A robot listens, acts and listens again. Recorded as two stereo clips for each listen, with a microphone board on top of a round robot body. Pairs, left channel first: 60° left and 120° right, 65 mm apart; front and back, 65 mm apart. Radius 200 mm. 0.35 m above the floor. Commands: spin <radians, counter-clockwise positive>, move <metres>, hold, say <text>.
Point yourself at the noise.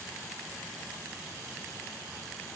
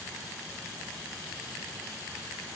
hold
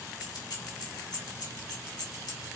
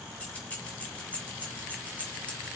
spin 1.22
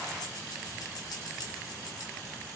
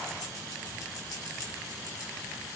spin 0.61
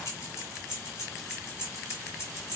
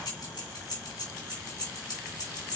spin 0.17
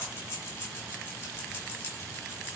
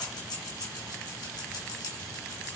say Facing the keys jangling, 2 to 4 m away.